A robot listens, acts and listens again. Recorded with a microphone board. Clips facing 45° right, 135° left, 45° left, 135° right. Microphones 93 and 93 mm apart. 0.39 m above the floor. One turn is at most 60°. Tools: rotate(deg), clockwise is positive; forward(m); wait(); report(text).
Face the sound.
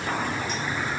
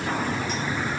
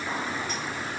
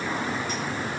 wait()
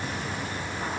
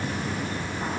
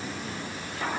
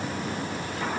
wait()
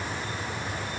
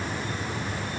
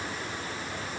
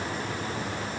report("I can't make out anything.")